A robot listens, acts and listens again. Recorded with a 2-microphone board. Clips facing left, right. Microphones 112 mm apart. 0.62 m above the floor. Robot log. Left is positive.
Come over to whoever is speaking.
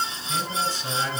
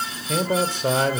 note: The man speaking: about 55° right or 125° right.
cmd yaw -55
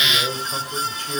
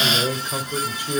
note: So it is at 10° right.
cmd yaw -10
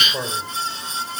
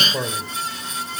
cmd fwd 1.0
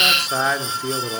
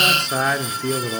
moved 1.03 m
cmd fwd 1.0
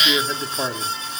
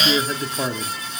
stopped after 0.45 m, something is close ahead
note: The man speaking is now 10° left.
cmd yaw +10
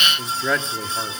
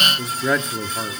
end: Arrived at the man speaking, straight ahead.